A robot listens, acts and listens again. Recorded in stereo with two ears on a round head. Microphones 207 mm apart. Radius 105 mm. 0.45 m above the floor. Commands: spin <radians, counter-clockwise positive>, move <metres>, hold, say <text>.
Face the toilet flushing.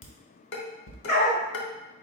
hold
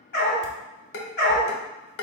hold
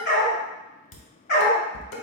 say I can't make out a toilet flushing to turn to.